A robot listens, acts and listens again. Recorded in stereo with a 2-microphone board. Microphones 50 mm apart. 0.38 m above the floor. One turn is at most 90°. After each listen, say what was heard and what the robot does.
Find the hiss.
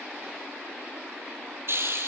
The hiss: about 55° right or 125° right. Turn 55° right.
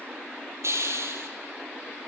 So it is at 65° right. Turn 65° right.
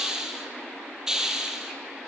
The hiss is now 10° right. Turn 10° right.
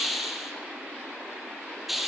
Found it: a hiss, straight ahead.